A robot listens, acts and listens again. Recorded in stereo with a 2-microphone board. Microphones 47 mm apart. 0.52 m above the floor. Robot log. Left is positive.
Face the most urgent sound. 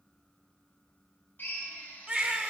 note: The baby crying: about 20° right or 160° right.
cmd yaw -20
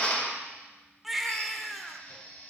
end: Facing the baby crying, under 1 m away.